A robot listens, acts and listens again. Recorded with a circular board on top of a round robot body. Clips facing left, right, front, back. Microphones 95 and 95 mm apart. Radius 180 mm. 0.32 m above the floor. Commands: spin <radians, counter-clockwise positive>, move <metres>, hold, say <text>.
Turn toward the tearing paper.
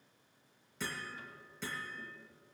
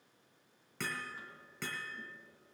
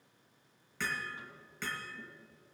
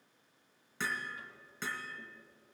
hold
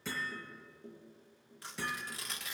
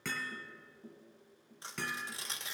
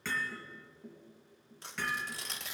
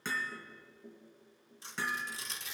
spin -0.44
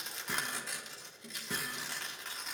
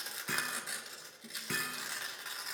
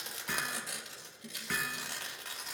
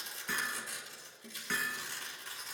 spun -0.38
say Found it: tearing paper, straight ahead.